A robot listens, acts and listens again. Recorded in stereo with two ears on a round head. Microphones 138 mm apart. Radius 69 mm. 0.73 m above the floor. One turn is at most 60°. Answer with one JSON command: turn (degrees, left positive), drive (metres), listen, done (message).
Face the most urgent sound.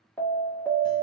{"turn": 30}
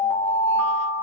{"turn": -15}
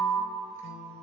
{"turn": -10}
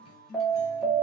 {"done": "Facing the alarm, 1 to 2 m away."}